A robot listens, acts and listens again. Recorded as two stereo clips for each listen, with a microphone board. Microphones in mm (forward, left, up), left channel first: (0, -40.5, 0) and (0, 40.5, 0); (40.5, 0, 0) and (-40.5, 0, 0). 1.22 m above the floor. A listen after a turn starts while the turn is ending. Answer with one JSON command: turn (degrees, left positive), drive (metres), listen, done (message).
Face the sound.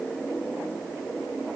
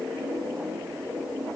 {"listen": true}
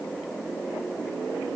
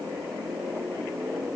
{"listen": true}
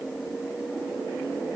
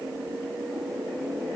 {"done": "I can't make out anything."}